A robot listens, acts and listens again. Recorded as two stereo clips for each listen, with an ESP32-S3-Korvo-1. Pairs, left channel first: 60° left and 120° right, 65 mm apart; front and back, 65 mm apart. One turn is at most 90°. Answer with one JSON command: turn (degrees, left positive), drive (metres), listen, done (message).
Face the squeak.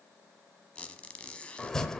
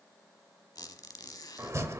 {"turn": -15}
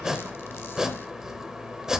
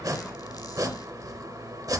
{"listen": true}
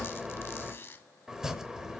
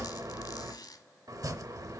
{"done": "Facing the squeak, under 1 m away."}